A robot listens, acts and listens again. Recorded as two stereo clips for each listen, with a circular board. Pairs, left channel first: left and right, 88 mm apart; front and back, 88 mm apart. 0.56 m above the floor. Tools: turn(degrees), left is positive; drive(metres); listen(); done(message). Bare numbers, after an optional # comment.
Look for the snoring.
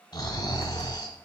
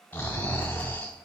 # The snoring: 70° left.
turn(70)
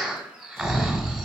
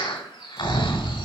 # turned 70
done("Facing the snoring.")